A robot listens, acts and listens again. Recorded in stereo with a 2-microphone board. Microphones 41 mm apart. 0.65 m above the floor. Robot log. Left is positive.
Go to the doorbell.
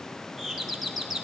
cmd yaw -30
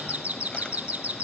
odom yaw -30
note: So it is at 145° right.
cmd yaw -145
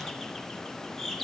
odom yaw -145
cmd fwd 1.0
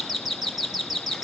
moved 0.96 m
cmd fwd 1.0
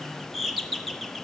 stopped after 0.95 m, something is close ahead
end: I am next to the doorbell.